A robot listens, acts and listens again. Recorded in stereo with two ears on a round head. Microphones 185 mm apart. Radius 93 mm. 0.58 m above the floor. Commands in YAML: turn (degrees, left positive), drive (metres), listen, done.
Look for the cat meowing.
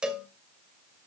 listen: true
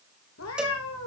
turn: 90
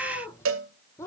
turn: 10
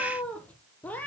done: "Facing the cat meowing."